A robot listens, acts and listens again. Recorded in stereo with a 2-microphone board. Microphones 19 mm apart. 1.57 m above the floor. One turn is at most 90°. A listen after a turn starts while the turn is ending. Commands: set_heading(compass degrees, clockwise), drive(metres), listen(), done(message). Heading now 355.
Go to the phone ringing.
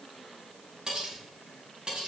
listen()
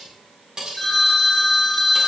set_heading(335)
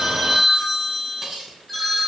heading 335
drive(1.0)
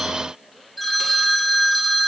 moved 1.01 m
drive(1.0)
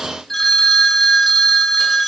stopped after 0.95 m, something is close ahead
set_heading(320)
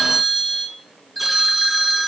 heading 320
done("Arrived at the phone ringing, straight ahead.")